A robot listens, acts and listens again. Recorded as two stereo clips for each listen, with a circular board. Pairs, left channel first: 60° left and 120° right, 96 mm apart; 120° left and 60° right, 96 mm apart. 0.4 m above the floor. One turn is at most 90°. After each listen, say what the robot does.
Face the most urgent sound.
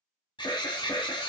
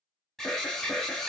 Turn 35° left.
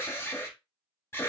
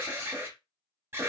Facing the alarm, under 1 m away.